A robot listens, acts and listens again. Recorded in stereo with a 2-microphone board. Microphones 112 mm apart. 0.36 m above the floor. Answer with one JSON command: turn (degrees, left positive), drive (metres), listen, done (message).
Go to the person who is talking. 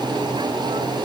{"listen": true}
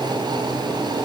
{"listen": true}
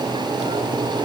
{"done": "I can't make out anyone speaking to turn to."}